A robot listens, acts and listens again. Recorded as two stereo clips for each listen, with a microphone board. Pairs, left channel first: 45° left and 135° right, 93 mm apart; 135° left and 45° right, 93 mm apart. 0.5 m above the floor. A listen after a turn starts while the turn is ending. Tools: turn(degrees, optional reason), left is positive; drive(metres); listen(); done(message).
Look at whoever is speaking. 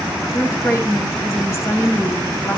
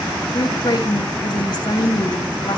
turn(degrees=100, reason="The woman speaking: 100° left.")
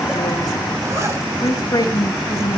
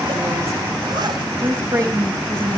done("Found it: a woman speaking, straight ahead.")